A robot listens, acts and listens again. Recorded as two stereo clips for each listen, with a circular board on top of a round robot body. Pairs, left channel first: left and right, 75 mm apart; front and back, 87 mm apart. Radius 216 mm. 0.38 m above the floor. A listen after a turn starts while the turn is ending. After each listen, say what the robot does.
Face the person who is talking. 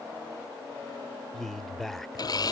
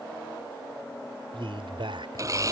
Turn 175° left.
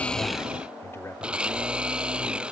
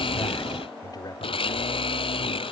Keep listening.
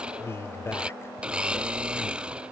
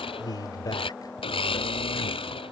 Turn 35° left.
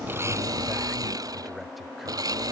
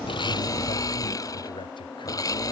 Keep listening.
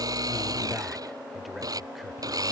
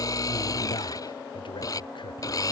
Keep listening.
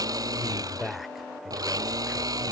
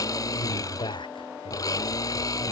Found it: a man speaking, straight ahead.